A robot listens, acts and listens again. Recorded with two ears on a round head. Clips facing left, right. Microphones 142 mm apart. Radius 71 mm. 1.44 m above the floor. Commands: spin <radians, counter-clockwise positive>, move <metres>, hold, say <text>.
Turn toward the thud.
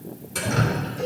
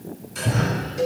spin -0.52
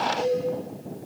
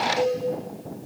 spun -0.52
hold
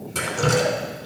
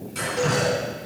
say I heard a thud, but can't make it out now. It was about straight ahead or 120° right.